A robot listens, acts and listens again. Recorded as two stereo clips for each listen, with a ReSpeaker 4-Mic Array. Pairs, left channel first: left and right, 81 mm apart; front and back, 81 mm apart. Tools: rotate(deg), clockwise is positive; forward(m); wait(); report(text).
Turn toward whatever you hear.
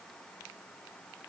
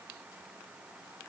wait()
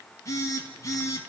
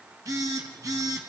rotate(-135)
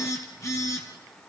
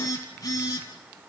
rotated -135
rotate(-40)
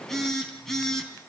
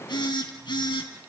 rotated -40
report("Found it: a phone buzzing, straight ahead.")